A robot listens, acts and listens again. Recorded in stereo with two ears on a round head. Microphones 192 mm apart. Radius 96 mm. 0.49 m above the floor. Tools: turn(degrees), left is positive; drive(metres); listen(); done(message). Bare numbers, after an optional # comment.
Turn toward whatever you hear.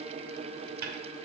# The dishes clattering: about 40° right or 140° right.
turn(-40)
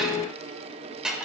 done("Facing the dishes clattering.")